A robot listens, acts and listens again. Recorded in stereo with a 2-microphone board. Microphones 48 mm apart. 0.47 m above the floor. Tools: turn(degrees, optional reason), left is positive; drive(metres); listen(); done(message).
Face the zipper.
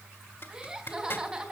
turn(degrees=50, reason="The zipper: about 50° left or 130° left.")
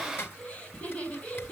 turn(degrees=70, reason="So it is at 70° left.")
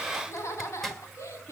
turn(degrees=10, reason="The zipper is now 10° left.")
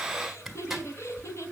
done("Facing the zipper, 1 to 2 m away.")